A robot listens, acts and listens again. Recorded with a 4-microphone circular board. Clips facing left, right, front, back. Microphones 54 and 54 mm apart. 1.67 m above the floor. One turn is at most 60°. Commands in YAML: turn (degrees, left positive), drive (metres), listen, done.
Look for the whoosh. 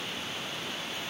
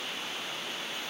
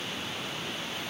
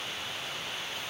listen: true
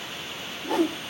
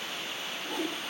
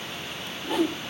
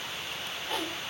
turn: 60
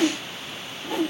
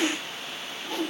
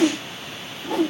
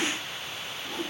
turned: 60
turn: 15
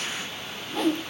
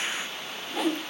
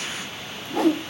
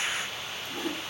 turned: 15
done: "Found it: a whoosh, straight ahead, 1 to 2 m away."